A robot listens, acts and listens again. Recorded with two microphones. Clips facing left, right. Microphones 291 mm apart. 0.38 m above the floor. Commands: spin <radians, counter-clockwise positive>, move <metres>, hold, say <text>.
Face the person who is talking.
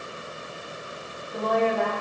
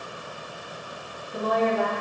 spin -0.52
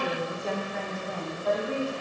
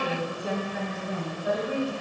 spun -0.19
spin -0.26
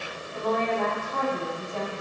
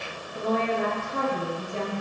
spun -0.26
spin -0.35
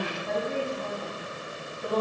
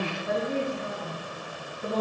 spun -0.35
spin -0.52
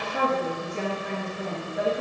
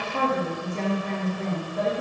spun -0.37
spin 0.17
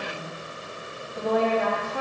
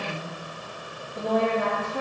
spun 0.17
say Facing the woman speaking.